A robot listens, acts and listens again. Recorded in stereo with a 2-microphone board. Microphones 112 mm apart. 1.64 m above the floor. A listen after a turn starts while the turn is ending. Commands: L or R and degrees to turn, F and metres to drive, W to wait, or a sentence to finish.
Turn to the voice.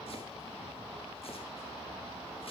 W
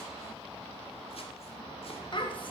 L50
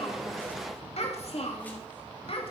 L60
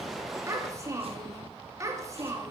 R30
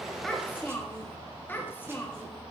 L20
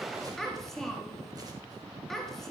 Found it: a child speaking, straight ahead.